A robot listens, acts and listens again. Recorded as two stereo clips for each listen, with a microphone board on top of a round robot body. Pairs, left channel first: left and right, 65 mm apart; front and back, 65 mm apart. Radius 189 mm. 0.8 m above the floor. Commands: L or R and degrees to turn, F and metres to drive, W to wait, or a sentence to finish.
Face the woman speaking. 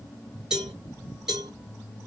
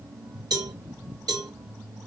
W
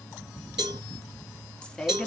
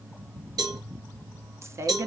L170
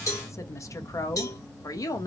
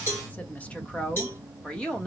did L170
L75
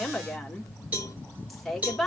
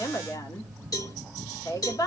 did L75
Found it: a woman speaking, straight ahead, 1 to 2 m away.